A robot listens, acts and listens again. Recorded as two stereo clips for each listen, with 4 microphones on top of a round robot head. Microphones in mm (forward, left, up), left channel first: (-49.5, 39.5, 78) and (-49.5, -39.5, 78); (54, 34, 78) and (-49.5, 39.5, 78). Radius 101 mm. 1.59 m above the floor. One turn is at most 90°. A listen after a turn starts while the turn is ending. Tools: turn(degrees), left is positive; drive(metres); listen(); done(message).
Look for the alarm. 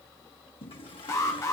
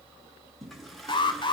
turn(degrees=35)
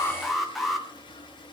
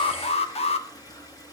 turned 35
done("Found it: an alarm, straight ahead.")